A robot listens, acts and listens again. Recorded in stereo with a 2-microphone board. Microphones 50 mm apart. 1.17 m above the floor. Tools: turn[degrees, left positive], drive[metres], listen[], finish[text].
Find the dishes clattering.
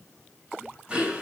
Action: listen[]
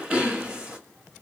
Action: listen[]
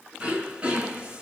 Action: finish[I can't make out dishes clattering, only throat clearing.]